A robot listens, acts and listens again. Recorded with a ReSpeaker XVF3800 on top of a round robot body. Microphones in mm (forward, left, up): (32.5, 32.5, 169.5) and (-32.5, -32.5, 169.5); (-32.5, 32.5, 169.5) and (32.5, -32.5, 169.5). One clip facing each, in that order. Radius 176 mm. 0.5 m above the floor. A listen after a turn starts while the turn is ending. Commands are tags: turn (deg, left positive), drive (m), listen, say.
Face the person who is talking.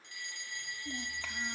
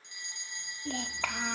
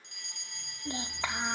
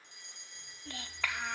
<turn deg="-160"/>
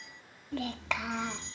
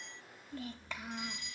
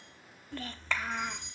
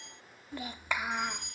<turn deg="35"/>
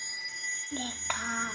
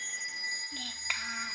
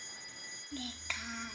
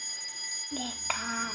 <turn deg="-10"/>
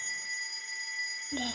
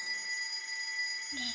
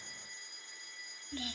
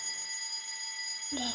<say>Found it: a child speaking, straight ahead.</say>